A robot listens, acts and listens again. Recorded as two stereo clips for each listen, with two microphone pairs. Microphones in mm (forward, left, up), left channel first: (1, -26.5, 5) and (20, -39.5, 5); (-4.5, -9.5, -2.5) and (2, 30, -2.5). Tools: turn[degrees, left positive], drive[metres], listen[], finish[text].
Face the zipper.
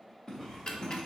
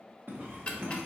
Thought: The zipper: 85° left.
Action: turn[85]
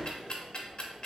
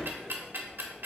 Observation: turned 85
Action: listen[]
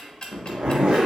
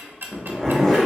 Thought: The zipper is now 15° right.
Action: turn[-15]
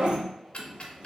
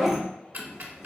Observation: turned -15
Action: finish[Facing the zipper.]